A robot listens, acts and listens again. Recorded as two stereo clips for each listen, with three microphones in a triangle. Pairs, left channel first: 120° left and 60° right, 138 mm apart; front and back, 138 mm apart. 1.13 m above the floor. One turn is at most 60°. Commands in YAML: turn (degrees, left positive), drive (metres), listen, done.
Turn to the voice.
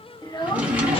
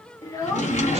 turn: 60
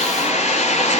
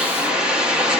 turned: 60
listen: true
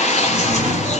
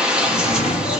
listen: true
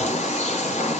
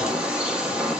done: "Facing where the child speaking came from. I can't hear it now."